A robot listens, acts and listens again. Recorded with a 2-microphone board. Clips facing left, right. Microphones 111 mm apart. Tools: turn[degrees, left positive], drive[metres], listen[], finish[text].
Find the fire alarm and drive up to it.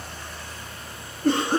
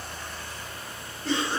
Action: listen[]
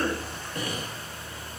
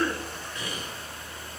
Action: listen[]
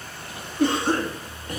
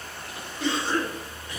Action: finish[I can't make out a fire alarm to turn to.]